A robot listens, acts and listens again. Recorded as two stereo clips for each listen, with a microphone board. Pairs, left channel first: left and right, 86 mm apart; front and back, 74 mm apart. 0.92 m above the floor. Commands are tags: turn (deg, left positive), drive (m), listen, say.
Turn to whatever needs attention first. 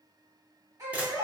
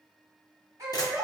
<turn deg="-135"/>
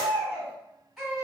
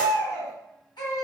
<say>Facing the baby crying, 1 to 2 m away.</say>